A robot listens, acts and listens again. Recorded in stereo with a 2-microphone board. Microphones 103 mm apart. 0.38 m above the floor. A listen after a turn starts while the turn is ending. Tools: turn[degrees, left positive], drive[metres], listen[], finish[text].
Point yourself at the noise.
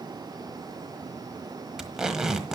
Action: turn[-30]
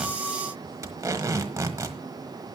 Thought: So it is at 145° right.
Action: turn[-145]
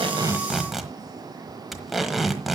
Action: finish[Found it: tape being pulled, straight ahead, 1 to 2 m away.]